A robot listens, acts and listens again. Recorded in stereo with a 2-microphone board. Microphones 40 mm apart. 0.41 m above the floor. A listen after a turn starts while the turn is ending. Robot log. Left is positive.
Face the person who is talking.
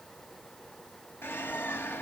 cmd idle
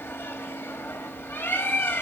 cmd idle
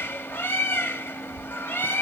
end: I can't make out anyone speaking to turn to.